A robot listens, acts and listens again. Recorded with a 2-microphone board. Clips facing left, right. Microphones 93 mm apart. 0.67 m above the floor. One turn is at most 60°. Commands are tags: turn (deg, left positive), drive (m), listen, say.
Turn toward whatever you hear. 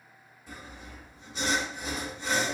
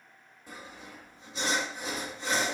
<turn deg="-50"/>
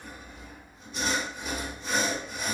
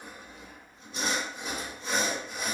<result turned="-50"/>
<turn deg="-60"/>
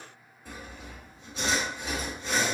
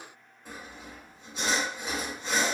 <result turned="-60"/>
<turn deg="-20"/>
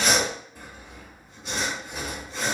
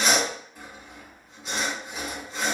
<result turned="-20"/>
<say>Found it: sawing, straight ahead, 1 to 2 m away.</say>